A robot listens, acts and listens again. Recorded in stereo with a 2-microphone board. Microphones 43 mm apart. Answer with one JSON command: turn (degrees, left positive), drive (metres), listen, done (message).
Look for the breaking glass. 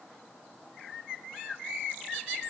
{"listen": true}
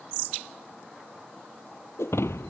{"turn": 90}
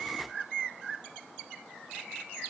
{"done": "I heard breaking glass from this way, but can't make it out now."}